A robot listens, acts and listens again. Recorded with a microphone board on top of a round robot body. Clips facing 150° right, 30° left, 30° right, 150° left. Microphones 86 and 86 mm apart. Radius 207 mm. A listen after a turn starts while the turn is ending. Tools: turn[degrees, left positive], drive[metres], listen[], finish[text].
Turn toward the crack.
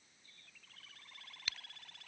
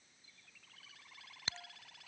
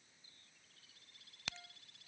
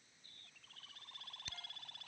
Thought: The crack: 35° right.
Action: turn[-35]
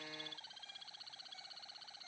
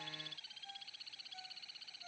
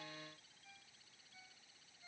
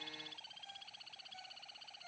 Action: finish[I heard a crack from this way, but can't make it out now.]